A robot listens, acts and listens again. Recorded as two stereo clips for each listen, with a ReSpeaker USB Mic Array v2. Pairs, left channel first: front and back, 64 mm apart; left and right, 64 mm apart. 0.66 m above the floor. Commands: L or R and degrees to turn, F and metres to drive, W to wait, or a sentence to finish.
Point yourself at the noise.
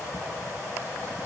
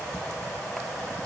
W
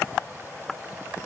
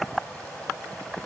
W
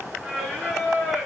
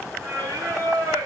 R100
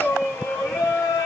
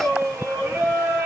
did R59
R40
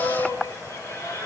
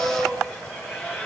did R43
Found it: singing, straight ahead.